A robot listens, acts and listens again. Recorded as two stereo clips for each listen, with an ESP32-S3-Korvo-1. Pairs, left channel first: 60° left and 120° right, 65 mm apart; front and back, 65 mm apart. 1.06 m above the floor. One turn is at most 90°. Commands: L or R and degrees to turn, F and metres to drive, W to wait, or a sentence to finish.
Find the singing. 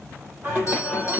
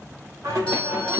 L90
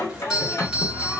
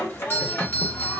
L30
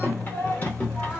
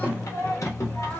Found it: singing, straight ahead, 1 to 2 m away.